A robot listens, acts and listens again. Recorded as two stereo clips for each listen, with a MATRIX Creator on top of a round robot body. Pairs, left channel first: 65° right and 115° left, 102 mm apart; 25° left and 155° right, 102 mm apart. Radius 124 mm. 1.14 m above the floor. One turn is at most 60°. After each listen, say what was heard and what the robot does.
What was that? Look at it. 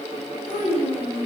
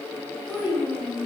The child speaking: 50° right. Turn 50° right.
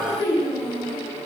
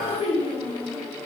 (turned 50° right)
Found it: a child speaking, straight ahead.